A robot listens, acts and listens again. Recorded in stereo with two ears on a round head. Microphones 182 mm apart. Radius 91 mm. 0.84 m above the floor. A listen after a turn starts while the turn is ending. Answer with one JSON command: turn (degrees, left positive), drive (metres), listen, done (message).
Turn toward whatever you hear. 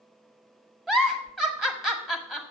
{"turn": -30}
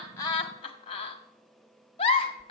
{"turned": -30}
{"turn": 25}
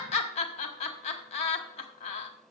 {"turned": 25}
{"turn": 30}
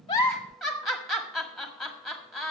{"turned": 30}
{"done": "Facing the giggle, 1 to 2 m away."}